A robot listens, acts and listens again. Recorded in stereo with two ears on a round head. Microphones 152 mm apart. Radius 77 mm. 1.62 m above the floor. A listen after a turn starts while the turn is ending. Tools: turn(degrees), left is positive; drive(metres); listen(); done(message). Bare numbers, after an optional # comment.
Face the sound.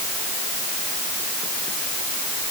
listen()
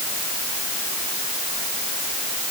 listen()
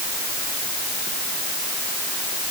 done("I can't make out anything.")